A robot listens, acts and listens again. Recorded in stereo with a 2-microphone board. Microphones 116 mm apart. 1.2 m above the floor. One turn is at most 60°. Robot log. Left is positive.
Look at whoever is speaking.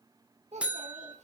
cmd yaw -60
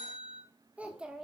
end: Facing the child speaking, 1 to 2 m away.